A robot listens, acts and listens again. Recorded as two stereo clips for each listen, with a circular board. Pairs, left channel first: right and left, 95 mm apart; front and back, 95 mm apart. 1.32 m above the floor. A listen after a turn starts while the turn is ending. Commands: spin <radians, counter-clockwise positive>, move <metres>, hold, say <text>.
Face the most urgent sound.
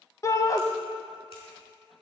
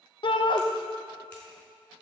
spin -0.61
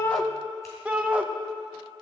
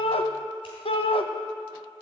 spin 0.26
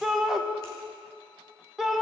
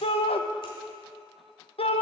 say Found it: a shout, straight ahead.